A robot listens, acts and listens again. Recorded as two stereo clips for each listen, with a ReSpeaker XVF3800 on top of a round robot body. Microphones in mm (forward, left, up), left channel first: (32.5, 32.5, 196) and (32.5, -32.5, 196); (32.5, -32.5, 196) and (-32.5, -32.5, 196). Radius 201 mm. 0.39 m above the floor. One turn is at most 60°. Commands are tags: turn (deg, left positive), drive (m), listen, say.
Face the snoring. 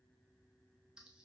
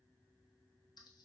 <listen/>
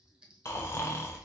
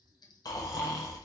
<turn deg="35"/>
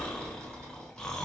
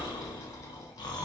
<turn deg="10"/>
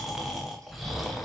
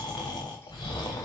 <say>Facing the snoring.</say>